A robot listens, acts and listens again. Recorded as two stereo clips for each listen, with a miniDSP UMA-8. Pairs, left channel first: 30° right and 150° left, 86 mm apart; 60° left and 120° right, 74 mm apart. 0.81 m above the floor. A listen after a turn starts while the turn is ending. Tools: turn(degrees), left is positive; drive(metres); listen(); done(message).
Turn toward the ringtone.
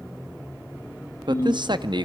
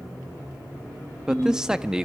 turn(degrees=-80)
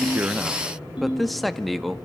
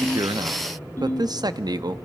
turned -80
done("Facing the ringtone.")